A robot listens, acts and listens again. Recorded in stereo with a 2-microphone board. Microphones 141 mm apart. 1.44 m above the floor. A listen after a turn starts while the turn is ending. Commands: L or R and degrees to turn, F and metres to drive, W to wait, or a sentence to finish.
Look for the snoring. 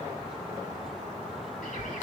W
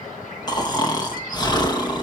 L30
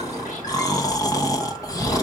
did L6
L25
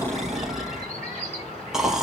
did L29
Facing the snoring, 1 to 2 m away.